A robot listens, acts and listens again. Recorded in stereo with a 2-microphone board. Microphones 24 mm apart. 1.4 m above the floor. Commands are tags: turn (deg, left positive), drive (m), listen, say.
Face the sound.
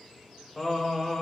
<turn deg="30"/>
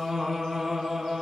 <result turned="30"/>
<say>Found it: singing, straight ahead, 2 to 4 m away.</say>